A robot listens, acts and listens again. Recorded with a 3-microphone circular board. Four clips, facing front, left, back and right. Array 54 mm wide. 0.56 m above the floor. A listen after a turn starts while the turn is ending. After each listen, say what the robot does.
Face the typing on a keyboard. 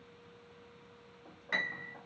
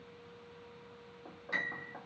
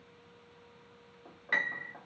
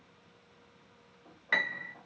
Keep listening.
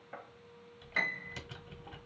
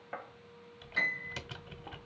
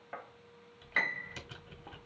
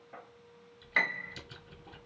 Turn 90° left.
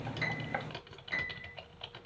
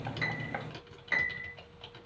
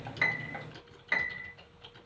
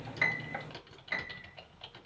Found it: typing on a keyboard, straight ahead.